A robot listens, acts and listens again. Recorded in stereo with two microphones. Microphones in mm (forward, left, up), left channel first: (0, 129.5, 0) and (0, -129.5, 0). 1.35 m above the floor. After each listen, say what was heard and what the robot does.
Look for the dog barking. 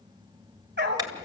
The dog barking: about 40° right or 140° right. Turn 40° right.
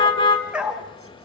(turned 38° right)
Found it: a dog barking, straight ahead, 2 to 4 m away.